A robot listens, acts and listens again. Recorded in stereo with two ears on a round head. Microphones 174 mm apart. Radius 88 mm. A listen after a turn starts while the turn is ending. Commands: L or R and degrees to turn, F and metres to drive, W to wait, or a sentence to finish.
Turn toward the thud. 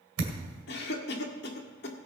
R90
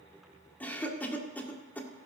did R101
L10
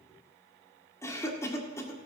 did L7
I heard a thud from this way, but can't make it out now.